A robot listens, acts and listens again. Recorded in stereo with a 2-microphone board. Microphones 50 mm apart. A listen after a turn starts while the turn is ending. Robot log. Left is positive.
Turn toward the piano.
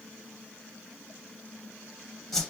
cmd idle
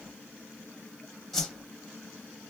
cmd idle
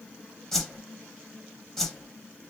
end: I can't make out a piano to turn to.